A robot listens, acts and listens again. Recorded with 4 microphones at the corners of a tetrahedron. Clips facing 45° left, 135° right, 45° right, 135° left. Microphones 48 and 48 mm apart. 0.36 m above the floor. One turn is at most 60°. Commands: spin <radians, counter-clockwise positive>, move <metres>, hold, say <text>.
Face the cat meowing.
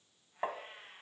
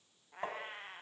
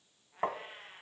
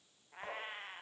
spin -1.05
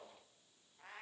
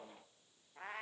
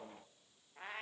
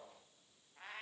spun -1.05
spin -1.05
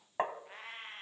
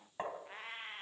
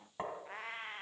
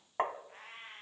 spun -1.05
spin -0.87
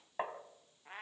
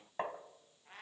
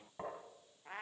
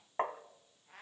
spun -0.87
spin -0.35
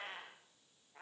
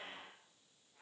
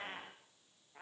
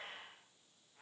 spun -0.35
say Found it: a cat meowing, straight ahead.